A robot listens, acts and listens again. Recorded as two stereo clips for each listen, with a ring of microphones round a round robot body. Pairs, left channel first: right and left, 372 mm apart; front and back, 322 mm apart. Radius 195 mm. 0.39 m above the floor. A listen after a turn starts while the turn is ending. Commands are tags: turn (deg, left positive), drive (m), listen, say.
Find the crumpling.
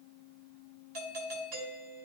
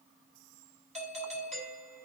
<listen/>
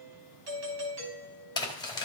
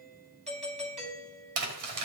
<turn deg="-170"/>
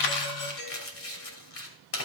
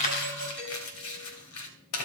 <turn deg="-40"/>
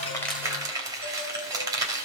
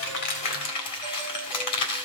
<turn deg="10"/>
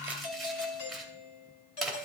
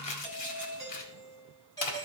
<say>Facing the crumpling, 2 to 4 m away.</say>